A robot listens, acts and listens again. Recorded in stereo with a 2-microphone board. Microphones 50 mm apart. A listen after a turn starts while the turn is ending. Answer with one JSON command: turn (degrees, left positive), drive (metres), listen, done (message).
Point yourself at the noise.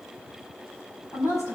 {"turn": 70}
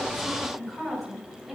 {"done": "Facing the woman speaking."}